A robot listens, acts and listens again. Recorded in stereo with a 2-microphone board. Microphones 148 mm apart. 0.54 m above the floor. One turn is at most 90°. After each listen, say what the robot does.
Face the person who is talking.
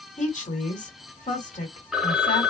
Turn 55° left.
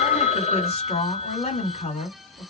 Turn 55° left.
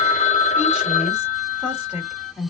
Turn 10° right.
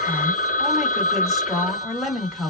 Facing the woman speaking, 1 to 2 m away.